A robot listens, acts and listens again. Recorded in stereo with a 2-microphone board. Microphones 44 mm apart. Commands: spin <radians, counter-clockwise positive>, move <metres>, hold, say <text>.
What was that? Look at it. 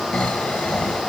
spin 0.52
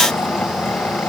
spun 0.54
spin 2.09
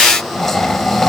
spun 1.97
say Facing the snoring, 1 to 2 m away.